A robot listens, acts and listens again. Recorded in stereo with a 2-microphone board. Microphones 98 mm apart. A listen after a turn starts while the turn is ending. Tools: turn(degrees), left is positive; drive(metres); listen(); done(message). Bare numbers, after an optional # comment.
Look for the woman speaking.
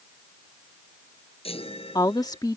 # The woman speaking: about 40° left or 140° left.
turn(40)
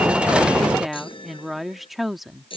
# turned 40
done("Found it: a woman speaking, straight ahead.")